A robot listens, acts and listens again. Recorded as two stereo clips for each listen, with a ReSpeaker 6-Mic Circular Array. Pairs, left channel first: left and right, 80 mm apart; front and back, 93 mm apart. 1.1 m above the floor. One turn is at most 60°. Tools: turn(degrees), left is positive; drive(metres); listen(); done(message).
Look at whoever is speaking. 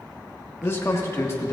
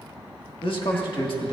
turn(degrees=30)
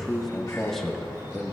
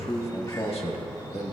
done("Found it: a man speaking, straight ahead, 1 to 2 m away.")